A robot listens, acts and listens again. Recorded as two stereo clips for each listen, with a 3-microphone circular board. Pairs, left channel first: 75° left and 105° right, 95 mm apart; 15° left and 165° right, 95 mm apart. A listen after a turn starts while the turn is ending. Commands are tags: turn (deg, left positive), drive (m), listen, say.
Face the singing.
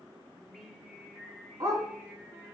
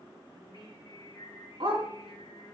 <turn deg="-30"/>
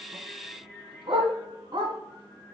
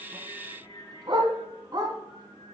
<turn deg="-25"/>
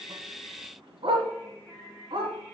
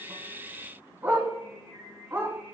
<say>Facing the singing.</say>